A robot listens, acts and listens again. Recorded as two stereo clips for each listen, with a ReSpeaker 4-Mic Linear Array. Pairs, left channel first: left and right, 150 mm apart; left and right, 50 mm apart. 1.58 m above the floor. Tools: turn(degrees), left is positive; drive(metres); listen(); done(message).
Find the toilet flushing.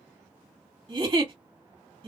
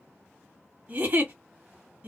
listen()
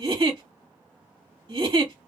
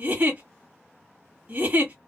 listen()
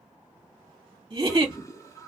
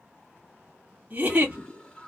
turn(degrees=20)
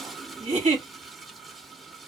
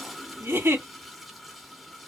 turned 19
done("Found it: a toilet flushing, straight ahead.")